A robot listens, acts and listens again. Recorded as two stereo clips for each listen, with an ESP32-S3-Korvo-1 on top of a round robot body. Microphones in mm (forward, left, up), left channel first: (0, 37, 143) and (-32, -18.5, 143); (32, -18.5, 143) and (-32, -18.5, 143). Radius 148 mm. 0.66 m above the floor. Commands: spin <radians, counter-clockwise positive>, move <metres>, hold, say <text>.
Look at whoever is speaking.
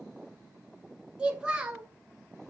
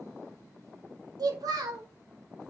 spin 2.88
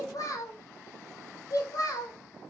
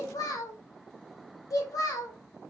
spin 0.52
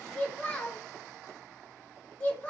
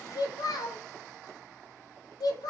say Facing the child speaking, 1 to 2 m away.